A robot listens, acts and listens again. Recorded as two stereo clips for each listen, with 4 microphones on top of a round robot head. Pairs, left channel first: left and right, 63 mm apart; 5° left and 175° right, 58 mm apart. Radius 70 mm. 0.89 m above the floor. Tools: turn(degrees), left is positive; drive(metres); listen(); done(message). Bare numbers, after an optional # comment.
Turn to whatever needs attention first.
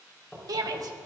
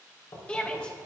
# The shout: 70° right.
turn(-70)
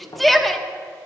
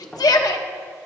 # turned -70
done("Facing the shout, 1 to 2 m away.")